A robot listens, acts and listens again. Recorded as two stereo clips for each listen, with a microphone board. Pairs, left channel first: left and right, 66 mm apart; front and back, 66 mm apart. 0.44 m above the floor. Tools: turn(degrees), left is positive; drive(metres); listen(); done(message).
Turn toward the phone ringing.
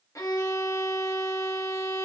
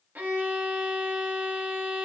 listen()
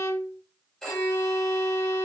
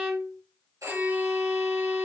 turn(degrees=170)
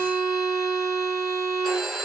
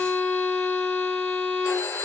done("Found it: a phone ringing, straight ahead.")